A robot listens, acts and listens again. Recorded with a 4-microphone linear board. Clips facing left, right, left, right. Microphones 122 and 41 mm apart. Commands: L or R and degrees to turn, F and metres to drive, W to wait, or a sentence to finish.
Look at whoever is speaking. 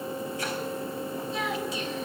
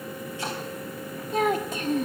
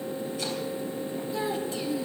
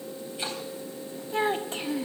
R50
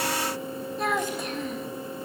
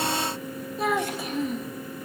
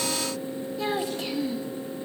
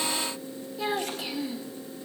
Found it: a child speaking, straight ahead, 1 to 2 m away.